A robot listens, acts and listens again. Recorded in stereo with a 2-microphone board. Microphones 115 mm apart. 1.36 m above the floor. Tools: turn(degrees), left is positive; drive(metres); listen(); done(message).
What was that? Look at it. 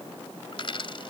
turn(degrees=50)
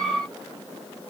listen()
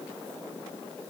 done("I heard a dropped coin, but can't make it out now. It was about straight ahead or 80° left.")